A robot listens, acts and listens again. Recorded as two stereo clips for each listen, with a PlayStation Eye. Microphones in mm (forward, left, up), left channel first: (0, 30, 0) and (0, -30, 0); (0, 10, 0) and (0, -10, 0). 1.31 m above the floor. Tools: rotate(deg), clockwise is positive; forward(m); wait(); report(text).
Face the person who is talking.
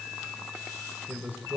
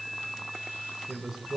rotate(30)
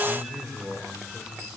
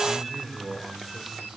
report("Found it: a man speaking, straight ahead, over 4 m away.")